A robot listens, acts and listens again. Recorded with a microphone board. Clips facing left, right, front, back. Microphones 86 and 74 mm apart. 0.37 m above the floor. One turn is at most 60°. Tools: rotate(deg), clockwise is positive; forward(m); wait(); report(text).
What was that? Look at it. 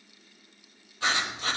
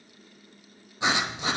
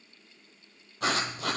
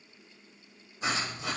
rotate(20)
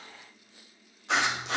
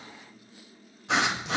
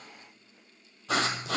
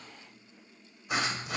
report("Found it: writing, straight ahead, 2 to 4 m away.")